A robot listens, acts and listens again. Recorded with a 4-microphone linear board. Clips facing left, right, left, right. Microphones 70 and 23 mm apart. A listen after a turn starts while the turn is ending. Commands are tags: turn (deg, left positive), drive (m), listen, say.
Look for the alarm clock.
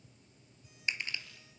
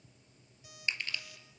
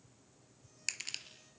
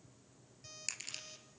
<turn deg="-90"/>
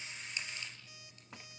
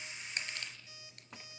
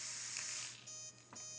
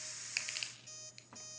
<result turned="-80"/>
<turn deg="-15"/>
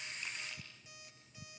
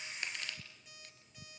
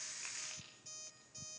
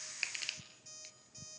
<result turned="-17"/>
<say>Found it: an alarm clock, straight ahead, over 4 m away.</say>